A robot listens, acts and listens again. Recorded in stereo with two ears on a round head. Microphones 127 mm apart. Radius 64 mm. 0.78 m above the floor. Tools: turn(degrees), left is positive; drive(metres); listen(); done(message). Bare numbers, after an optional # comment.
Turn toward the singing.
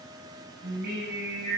# The singing: about 75° right or 105° right.
turn(-75)
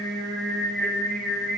done("Found it: singing, straight ahead.")